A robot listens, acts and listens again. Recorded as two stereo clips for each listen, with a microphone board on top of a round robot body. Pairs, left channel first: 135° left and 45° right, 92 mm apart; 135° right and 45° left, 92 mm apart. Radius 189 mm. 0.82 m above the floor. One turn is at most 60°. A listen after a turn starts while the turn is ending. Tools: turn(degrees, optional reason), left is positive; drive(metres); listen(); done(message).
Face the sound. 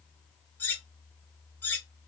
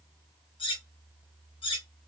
turn(degrees=-60, reason="The cutlery clinking: 155° right.")
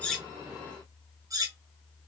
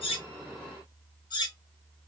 turn(degrees=-60, reason="The cutlery clinking is now 95° right.")
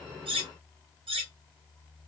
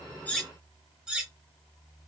turn(degrees=-35, reason="The cutlery clinking is now 35° right.")
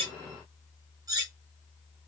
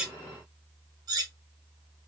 done("Facing the cutlery clinking, under 1 m away.")